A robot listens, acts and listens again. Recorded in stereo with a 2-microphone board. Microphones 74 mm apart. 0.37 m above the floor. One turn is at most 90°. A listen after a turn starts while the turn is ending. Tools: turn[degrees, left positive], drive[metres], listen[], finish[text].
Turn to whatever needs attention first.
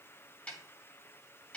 Action: listen[]
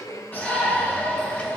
Thought: The shout: about 25° left or 155° left.
Action: turn[25]
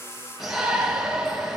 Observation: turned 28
Action: finish[Found it: a shout, straight ahead, over 4 m away.]